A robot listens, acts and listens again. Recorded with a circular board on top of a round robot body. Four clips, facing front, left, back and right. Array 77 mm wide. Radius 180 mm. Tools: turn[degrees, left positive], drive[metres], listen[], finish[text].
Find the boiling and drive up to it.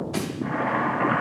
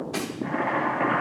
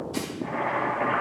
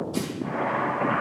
Action: drive[1.0]
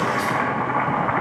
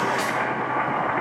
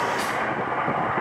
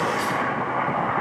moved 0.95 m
Action: drive[1.0]
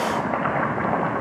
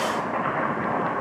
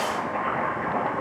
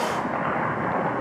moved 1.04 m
Action: drive[1.0]
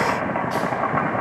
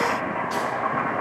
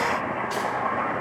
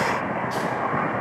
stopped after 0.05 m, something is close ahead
Action: finish[Arrived at the boiling, straight ahead.]